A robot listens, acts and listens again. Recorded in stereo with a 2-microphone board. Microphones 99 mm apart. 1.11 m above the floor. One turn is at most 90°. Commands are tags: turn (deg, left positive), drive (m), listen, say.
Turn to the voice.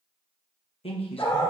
<turn deg="90"/>
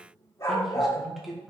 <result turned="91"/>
<say>Found it: a man speaking, straight ahead, under 1 m away.</say>